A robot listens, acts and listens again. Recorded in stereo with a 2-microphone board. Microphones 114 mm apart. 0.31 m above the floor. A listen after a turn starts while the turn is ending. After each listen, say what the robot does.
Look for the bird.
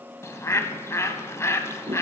Turn 25° left.
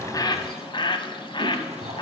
Turn 130° left.
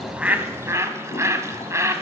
Turn 30° right.
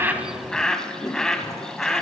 Found it: a bird, straight ahead.